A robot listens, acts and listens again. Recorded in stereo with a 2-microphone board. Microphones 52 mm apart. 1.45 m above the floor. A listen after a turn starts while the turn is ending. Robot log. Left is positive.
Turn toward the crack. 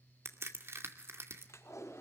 note: The crack: about 55° right or 125° right.
cmd yaw -55
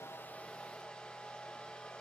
cmd idle
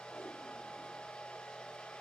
end: I heard a crack, but can't make it out now. It was about straight ahead or 70° right.